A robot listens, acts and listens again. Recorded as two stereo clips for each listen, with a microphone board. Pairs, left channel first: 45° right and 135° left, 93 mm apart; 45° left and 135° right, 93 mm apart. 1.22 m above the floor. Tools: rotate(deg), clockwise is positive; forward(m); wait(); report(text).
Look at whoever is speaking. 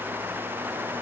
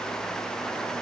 wait()
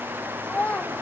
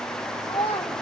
rotate(-25)
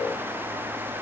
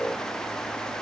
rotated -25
wait()
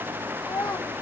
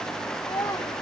report("Found it: a child speaking, straight ahead.")